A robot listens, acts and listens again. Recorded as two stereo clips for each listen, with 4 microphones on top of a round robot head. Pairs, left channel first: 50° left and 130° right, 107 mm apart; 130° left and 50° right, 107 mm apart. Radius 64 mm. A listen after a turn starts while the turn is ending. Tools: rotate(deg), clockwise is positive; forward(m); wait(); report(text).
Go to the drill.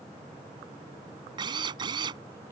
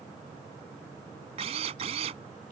rotate(85)
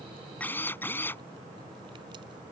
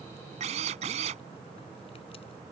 rotate(25)
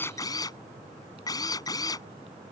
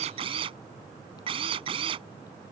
rotate(10)
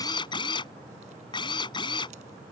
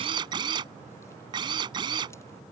forward(1.0)
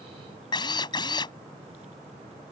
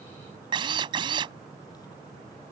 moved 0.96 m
forward(1.0)
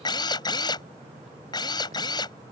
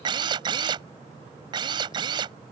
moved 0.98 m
forward(1.0)
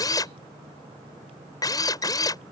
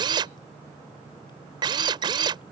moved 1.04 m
forward(1.0)
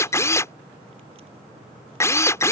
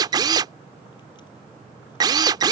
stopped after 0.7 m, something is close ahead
rotate(10)
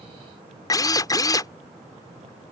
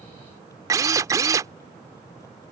report("I am next to the drill.")